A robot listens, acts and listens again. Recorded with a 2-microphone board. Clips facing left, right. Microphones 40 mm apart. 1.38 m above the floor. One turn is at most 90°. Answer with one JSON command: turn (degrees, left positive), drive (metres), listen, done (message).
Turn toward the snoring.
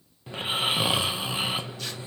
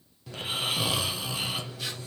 {"turn": 25}
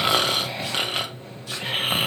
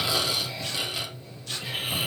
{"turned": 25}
{"turn": 90}
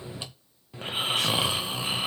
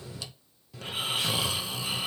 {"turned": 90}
{"turn": 30}
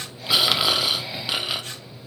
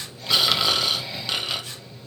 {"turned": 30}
{"turn": 10}
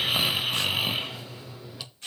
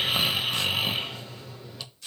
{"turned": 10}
{"done": "Found it: snoring, straight ahead, under 1 m away."}